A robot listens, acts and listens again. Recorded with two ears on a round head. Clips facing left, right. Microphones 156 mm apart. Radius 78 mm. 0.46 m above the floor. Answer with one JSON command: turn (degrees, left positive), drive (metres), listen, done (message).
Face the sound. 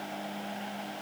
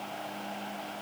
{"listen": true}
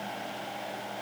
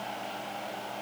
{"listen": true}
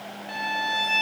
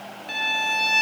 {"turn": -40}
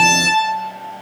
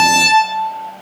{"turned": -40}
{"turn": -100}
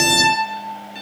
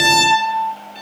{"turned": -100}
{"turn": 15}
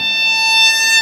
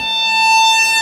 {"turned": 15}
{"done": "Facing the violin."}